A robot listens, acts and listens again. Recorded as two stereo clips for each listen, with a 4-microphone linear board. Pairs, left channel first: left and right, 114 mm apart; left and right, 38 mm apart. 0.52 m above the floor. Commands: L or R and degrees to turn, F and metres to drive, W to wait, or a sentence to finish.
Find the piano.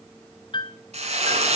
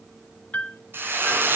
L40
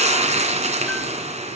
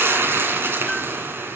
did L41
W
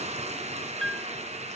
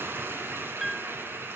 Found it: a piano, straight ahead.